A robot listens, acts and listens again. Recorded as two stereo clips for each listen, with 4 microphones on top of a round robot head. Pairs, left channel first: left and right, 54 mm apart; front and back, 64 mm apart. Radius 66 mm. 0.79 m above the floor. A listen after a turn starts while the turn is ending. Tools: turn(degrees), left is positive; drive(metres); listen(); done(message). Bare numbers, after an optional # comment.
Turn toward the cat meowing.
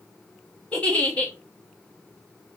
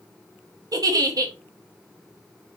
listen()
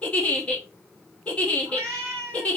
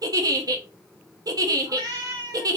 # The cat meowing: 150° right.
turn(-150)
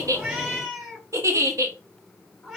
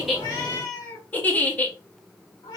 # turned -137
# The cat meowing is now 15° right.
turn(-15)
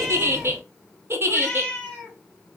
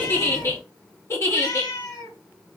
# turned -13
done("Facing the cat meowing, 2 to 4 m away.")